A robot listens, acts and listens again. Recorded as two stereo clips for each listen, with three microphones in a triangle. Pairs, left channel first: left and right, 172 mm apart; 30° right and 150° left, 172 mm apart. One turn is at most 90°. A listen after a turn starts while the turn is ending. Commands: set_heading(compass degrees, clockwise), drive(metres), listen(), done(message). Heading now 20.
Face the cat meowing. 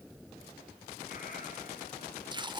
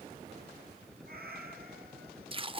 listen()
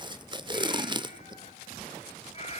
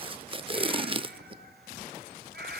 set_heading(290)
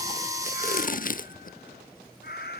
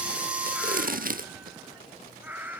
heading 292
set_heading(222)
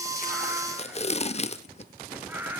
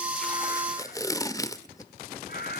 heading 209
set_heading(219)
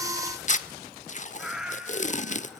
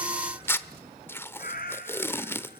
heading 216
done("Found it: a cat meowing, straight ahead.")